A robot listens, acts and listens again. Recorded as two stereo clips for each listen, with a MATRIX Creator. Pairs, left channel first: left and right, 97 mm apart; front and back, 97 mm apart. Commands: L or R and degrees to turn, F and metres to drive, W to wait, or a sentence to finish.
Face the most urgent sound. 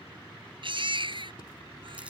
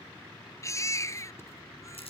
R60
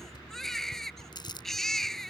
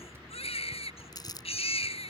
Found it: a baby crying, straight ahead.